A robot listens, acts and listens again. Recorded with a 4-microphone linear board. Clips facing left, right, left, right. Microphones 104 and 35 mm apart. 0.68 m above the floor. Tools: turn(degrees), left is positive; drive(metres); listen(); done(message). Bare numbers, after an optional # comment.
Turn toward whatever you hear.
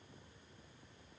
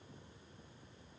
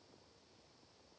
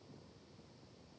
listen()
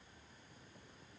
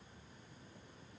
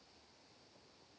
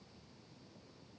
listen()
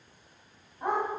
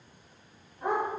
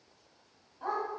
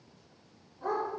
# The dog barking: about 30° left or 150° left.
turn(30)
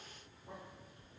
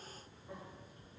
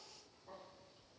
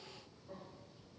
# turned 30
listen()
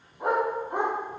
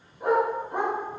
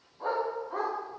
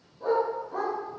# So it is at 95° left.
turn(95)
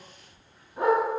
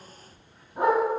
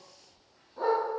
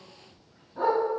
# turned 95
# The dog barking is now 25° right.
turn(-25)
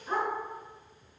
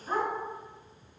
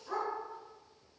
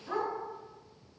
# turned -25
done("Found it: a dog barking, straight ahead.")